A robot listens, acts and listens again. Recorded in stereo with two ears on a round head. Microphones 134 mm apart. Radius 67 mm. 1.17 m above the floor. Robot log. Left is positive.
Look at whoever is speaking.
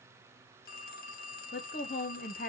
note: The woman speaking: about 60° left or 120° left.
cmd yaw +60
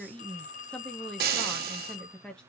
end: Facing the woman speaking, under 1 m away.